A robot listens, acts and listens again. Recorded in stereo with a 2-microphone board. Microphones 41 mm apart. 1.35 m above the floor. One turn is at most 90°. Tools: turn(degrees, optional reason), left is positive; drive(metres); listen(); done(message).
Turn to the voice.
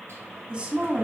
turn(degrees=-20, reason="The woman speaking: about 20° right or 160° right.")
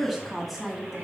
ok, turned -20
done("Facing the woman speaking, 2 to 4 m away.")